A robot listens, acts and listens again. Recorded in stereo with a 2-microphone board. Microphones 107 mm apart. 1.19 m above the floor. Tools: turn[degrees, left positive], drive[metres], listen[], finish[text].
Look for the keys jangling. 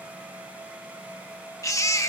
Action: listen[]
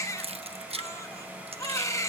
Thought: The keys jangling: about 65° right or 115° right.
Action: turn[-65]
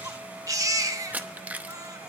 Thought: So it is at 15° right.
Action: turn[-15]
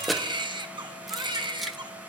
Action: finish[Facing the keys jangling, under 1 m away.]